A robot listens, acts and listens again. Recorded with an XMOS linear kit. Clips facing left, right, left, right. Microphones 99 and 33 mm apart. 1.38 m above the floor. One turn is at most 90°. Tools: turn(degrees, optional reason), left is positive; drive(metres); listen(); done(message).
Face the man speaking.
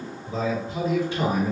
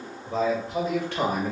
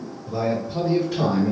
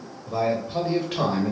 turn(degrees=-55, reason="The man speaking: about 55° right or 125° right.")
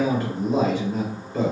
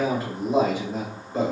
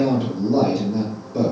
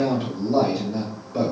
turn(degrees=-20, reason="So it is at 20° right.")
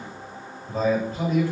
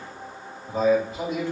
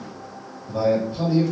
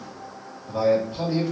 turn(degrees=-20, reason="The man speaking is now 20° right.")
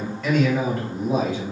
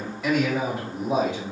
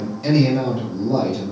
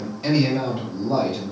turn(degrees=-25, reason="The man speaking is now 25° right.")
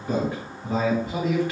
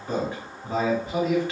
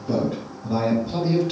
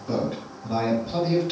done("Facing the man speaking.")